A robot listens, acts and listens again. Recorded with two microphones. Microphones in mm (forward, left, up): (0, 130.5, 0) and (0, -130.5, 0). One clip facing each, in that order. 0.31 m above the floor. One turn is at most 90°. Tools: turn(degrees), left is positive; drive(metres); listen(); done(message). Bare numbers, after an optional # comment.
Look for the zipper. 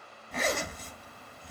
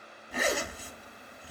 turn(-30)
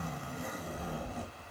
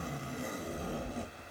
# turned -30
# So it is at 145° right.
turn(-90)
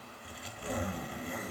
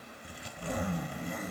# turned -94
# The zipper is now 55° right.
turn(-55)
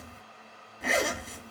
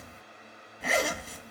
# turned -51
done("Found it: a zipper, straight ahead, under 1 m away.")